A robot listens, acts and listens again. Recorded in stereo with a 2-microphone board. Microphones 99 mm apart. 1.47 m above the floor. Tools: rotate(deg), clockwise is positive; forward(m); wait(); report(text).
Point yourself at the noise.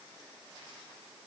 wait()
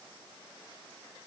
wait()
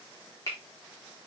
rotate(-40)
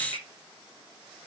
wait()
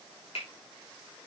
rotate(-100)
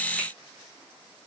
wait()
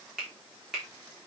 report("Facing the finger snap, 2 to 4 m away.")